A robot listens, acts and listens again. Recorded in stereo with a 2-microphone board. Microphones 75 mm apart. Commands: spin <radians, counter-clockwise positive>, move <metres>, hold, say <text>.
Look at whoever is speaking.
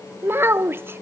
spin -0.52
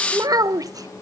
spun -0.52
spin -1.92
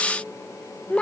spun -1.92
spin 0.35
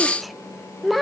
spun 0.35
say Found it: a child speaking, straight ahead, under 1 m away.